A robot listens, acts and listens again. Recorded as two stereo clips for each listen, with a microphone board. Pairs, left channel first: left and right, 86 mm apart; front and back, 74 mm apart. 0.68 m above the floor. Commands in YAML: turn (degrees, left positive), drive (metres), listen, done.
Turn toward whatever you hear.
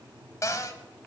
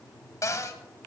turn: 40
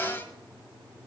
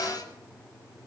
turn: 25
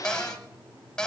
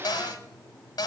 turn: 10
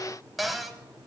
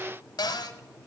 done: "Found it: a cupboard door, straight ahead, 1 to 2 m away."